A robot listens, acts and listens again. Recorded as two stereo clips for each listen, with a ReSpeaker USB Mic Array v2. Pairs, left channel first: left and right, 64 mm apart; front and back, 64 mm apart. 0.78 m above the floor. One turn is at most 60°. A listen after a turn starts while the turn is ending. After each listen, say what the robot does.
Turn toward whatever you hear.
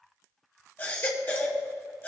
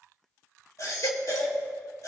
Turn 30° left.
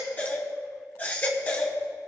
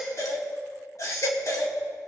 Turn 30° left.
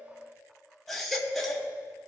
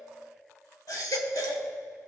Found it: a baby crying, straight ahead, 1 to 2 m away.